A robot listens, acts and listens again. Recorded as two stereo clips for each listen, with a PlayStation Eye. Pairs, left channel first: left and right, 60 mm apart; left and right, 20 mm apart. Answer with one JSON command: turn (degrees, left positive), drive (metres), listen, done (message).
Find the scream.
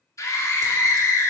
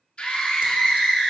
{"turn": 60}
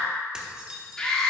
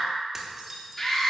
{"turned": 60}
{"turn": 15}
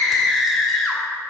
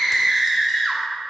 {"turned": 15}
{"done": "Found it: a scream, straight ahead."}